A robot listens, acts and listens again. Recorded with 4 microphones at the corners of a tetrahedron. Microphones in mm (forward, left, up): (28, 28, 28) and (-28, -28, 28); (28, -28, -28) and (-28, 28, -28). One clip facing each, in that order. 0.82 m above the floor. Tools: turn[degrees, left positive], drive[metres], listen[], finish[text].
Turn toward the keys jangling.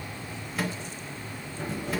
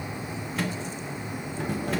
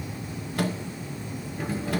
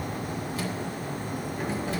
Thought: The keys jangling: 160° right.
Action: turn[-160]
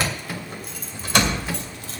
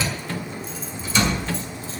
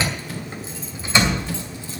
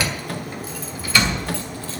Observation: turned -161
Thought: The keys jangling is now 25° left.
Action: turn[25]
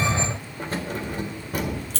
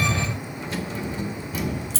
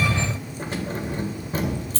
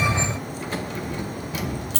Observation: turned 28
Action: finish[Found it: keys jangling, straight ahead.]